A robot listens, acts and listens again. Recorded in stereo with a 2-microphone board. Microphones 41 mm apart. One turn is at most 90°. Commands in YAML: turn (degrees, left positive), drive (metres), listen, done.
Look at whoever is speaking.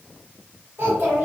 turn: -60
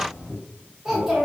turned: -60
turn: -10
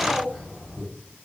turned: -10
done: "Facing the child speaking, 1 to 2 m away."